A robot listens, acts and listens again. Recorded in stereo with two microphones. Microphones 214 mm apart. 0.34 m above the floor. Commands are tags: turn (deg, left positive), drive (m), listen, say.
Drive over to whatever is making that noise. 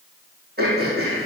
<turn deg="-45"/>
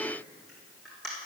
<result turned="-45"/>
<drive m="1.0"/>
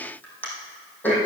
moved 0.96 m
<drive m="1.0"/>
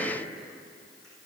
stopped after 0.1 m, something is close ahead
<listen/>
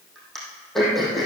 <say>Something is in my way. I am facing the throat clearing but have not reached it.</say>